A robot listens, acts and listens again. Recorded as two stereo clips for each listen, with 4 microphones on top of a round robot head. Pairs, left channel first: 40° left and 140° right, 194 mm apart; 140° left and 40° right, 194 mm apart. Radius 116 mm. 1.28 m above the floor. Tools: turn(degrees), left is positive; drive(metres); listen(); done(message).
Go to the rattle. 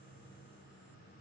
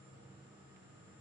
listen()
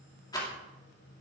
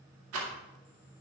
turn(degrees=-30)
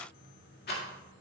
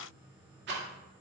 drive(metres=1.0)
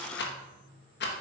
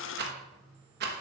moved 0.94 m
drive(metres=1.0)
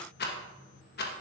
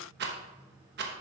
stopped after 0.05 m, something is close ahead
done("Arrived at the rattle, straight ahead.")